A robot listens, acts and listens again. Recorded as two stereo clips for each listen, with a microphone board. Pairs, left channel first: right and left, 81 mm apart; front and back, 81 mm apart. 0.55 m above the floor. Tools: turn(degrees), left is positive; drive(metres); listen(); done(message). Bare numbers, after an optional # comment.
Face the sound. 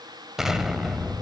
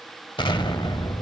done("Found it: an explosion, straight ahead, under 1 m away.")